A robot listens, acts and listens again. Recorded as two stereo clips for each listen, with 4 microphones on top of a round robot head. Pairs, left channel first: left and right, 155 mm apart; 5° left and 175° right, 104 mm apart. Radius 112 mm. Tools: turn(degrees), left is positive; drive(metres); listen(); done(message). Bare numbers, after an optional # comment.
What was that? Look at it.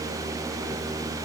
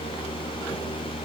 listen()
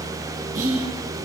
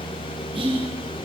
# The whispering: 135° right.
turn(-135)
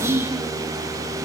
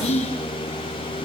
# The whispering is now 20° right.
turn(-20)
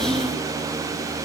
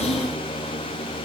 listen()
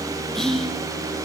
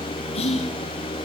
done("Found it: whispering, straight ahead, over 4 m away.")